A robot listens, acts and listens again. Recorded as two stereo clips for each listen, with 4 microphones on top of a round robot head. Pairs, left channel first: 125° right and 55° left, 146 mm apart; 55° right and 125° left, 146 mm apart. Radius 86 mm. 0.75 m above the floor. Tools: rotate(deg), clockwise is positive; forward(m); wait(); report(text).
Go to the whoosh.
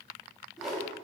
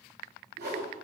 rotate(-140)
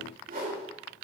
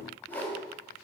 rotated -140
rotate(-25)
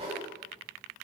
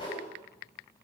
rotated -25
forward(1.0)
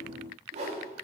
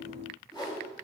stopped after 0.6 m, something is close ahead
rotate(-10)
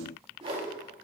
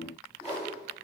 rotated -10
report("Something is in my way. I am facing the whoosh but have not reached it.")